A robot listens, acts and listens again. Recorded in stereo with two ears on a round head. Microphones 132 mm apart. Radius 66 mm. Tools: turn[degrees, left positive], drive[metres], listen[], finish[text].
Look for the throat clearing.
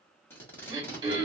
Thought: The throat clearing: about 30° right or 150° right.
Action: turn[-30]
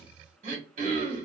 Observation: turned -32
Thought: So it is at 115° right.
Action: turn[-115]
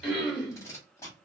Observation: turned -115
Action: finish[Facing the throat clearing.]